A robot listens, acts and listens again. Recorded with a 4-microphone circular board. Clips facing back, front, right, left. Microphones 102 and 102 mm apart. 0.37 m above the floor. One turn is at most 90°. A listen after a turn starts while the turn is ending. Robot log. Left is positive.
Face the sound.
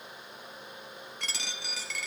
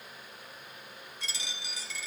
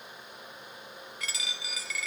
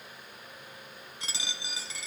note: The dropped coin: 155° left.
cmd yaw +90
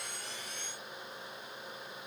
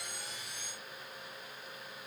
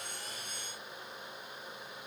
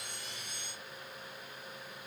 note: Nothing new. It was at 65° left.
cmd yaw +65
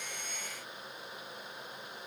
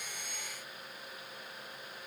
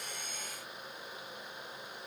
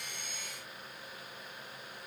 end: Facing where the dropped coin came from. I can't hear it now.